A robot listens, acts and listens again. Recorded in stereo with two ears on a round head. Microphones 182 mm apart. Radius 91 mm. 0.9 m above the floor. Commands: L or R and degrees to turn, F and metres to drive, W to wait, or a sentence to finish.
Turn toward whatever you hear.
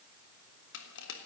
L65
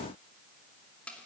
Found it: crushing, straight ahead, 2 to 4 m away.